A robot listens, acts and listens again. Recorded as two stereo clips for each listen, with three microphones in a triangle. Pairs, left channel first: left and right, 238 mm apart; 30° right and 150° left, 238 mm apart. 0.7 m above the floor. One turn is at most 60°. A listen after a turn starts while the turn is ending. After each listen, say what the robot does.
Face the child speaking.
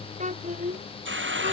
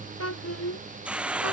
Turn 30° right.
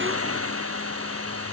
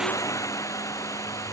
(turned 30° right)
Keep listening.
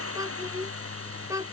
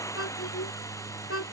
Turn 15° right.
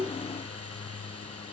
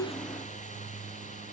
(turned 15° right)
Keep listening.
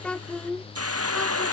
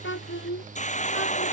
Found it: a child speaking, straight ahead.